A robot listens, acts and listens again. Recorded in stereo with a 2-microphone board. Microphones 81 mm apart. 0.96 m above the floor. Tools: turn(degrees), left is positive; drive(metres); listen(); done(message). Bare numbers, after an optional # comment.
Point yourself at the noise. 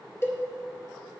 # The cowbell: about 35° left or 145° left.
turn(35)
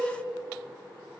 done("Facing the cowbell, 2 to 4 m away.")